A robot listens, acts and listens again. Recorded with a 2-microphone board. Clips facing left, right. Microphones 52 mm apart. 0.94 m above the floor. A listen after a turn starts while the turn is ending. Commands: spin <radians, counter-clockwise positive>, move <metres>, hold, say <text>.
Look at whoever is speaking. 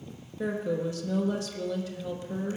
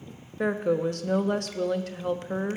spin -0.96
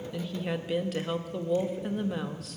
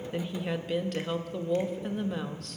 say Facing the woman speaking, under 1 m away.